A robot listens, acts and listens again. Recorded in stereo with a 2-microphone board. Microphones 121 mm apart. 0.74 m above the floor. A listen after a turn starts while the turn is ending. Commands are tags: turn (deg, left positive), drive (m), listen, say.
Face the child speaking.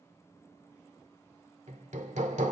<listen/>
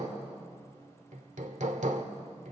<listen/>
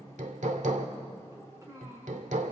<turn deg="-25"/>
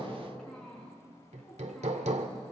<say>Facing the child speaking, over 4 m away.</say>